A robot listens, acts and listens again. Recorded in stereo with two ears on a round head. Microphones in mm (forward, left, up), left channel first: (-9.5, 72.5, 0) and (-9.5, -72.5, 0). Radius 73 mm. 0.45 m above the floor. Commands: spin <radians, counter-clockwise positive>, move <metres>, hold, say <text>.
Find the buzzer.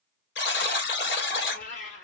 spin 1.57
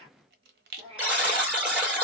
say Facing the buzzer.